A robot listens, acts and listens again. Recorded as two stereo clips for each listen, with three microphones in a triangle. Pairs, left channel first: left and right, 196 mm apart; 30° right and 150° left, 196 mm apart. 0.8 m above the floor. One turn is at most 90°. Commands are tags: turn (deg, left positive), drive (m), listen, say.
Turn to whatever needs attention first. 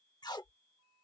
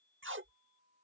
<listen/>
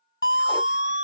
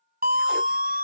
<turn deg="90"/>
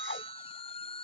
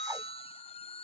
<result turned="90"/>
<turn deg="30"/>
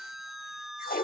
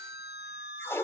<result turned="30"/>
<say>Facing the siren.</say>